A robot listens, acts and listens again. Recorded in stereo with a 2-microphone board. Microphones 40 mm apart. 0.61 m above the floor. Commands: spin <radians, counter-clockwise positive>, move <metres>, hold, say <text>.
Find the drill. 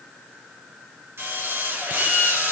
spin -1.57
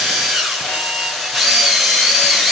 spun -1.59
say Facing the drill, over 4 m away.